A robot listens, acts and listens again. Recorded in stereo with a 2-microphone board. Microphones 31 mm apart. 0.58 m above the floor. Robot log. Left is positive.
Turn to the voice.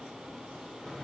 cmd idle
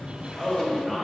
cmd yaw +30
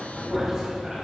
cmd idle
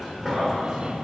cmd idle
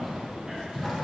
end: I heard a man speaking, but can't make it out now. It was about 30° right or 150° left.